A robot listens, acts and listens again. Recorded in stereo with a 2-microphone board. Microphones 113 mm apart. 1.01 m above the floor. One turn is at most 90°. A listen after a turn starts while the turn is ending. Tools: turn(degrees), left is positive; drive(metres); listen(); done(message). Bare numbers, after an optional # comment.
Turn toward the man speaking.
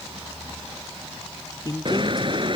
# The man speaking: about 35° left or 145° left.
turn(35)
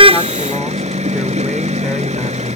listen()
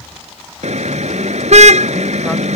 listen()
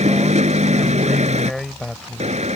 done("Facing the man speaking.")